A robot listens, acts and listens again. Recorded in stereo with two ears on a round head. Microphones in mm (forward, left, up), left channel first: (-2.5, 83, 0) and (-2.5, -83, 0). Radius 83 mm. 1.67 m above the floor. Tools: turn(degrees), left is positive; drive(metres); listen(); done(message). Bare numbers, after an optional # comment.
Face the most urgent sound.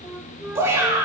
turn(-30)
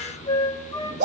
# So it is at 140° right.
turn(-140)
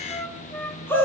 # The shout is now 10° left.
turn(10)
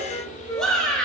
done("Found it: a shout, straight ahead.")